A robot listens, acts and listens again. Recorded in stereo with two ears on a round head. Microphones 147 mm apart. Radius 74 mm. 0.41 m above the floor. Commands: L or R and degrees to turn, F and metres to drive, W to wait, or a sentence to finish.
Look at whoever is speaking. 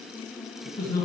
L20
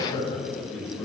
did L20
Facing the man speaking, 2 to 4 m away.